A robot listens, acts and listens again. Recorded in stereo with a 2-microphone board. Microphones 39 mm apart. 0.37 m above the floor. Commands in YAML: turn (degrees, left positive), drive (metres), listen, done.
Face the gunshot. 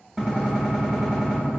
turn: 30
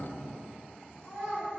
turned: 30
listen: true
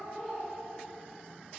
done: "I heard a gunshot, but can't make it out now. It was about 30° right or 150° left."